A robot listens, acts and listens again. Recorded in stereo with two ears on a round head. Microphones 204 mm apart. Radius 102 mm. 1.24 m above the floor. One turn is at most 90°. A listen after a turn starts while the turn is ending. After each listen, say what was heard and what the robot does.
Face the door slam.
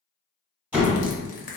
Turn 30° right.
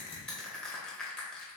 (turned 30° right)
Keep listening.
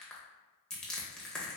I heard a door slam, but can't make it out now. It was about 25° left or 145° right.